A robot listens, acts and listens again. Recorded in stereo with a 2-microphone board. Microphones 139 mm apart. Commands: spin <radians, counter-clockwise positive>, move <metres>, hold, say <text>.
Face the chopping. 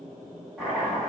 spin -0.52
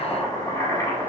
spin 0.44
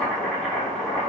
say Found it: chopping, straight ahead.